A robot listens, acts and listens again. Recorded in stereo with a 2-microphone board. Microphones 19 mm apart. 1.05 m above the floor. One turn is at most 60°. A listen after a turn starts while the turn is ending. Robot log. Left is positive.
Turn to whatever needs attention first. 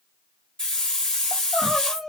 cmd yaw +30
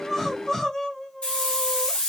note: So it is at 150° left.
cmd yaw +60
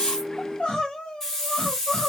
note: The crying is now 95° left.
cmd yaw +60
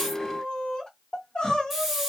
note: The crying is now 60° left.
cmd yaw +60
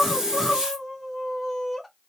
end: Found it: crying, straight ahead, under 1 m away.